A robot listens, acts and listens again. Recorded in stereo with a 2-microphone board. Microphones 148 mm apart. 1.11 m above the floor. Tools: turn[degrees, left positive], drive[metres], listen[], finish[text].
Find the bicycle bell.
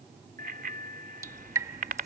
Action: turn[-90]
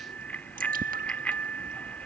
Thought: So it is at 10° left.
Action: turn[10]
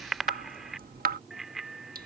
Action: finish[Found it: a bicycle bell, straight ahead.]